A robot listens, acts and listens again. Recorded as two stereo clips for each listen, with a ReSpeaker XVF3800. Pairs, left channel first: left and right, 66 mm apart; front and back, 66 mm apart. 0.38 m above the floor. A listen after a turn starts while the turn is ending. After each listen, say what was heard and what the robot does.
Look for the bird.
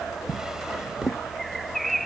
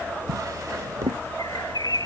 Facing the bird.